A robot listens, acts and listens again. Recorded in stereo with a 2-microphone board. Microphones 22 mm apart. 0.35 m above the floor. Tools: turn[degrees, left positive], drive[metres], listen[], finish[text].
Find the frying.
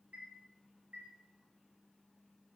Action: listen[]
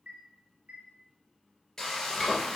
Thought: The frying: about 20° left or 160° left.
Action: turn[20]
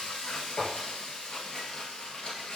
Thought: So it is at 140° left.
Action: turn[140]
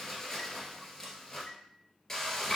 Thought: The frying is now 15° left.
Action: turn[15]
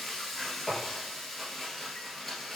Action: finish[Facing the frying, 1 to 2 m away.]